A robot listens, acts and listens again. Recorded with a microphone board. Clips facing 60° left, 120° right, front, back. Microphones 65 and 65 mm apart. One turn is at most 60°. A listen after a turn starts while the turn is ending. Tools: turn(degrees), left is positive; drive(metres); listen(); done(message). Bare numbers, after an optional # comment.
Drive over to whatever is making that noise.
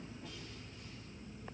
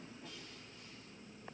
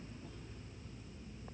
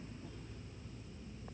listen()
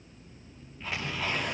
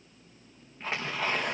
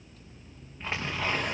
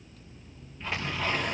# The tearing paper: 65° right.
turn(-60)
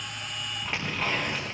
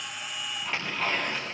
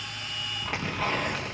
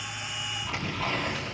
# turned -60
# The tearing paper is now 15° right.
turn(-15)
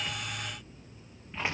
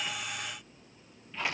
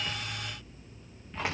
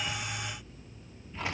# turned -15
drive(1.0)
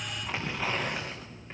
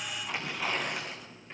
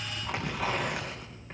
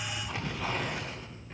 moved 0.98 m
drive(1.0)
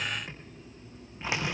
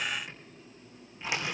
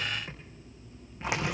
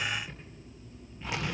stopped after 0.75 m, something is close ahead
done("Blocked. The tearing paper is further on, straight ahead.")